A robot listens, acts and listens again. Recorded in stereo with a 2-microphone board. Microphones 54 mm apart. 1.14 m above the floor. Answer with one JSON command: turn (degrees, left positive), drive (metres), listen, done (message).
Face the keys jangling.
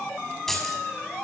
{"turn": 30}
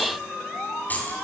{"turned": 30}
{"turn": 150}
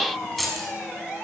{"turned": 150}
{"done": "Facing the keys jangling, over 4 m away."}